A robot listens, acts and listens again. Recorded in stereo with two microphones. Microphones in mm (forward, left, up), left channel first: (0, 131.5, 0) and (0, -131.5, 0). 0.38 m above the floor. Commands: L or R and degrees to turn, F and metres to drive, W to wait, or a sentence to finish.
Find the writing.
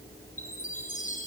W
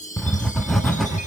L30
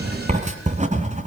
R30
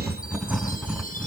Found it: writing, straight ahead.